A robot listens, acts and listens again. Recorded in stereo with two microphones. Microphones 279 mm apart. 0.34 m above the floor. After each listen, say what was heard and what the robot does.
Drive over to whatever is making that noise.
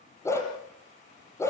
Turn 30° left.
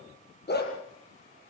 So it is at 145° left. Turn 145° left.
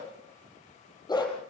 The dog barking is now 15° left. Turn 15° left.
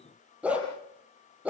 Drive 1.0 m forward.
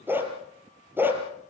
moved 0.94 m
Drive 1.0 m forward.
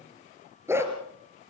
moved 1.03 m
The dog barking is now 10° right. Turn 10° right.
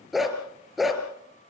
Drive 1.0 m forward.
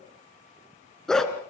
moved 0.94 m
Drive 1.0 m forward.
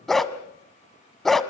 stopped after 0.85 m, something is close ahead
I am next to the dog barking.